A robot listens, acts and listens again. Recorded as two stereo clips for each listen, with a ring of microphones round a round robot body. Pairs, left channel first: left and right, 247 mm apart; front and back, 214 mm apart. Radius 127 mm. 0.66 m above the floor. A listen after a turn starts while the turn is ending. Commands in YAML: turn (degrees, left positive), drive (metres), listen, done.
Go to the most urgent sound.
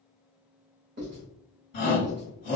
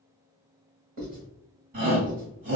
turn: 140
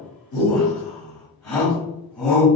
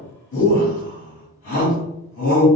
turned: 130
turn: 15
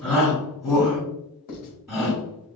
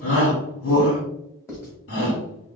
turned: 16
drive: 1.0
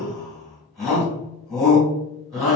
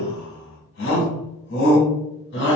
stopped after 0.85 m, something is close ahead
done: "Arrived at the shout, straight ahead."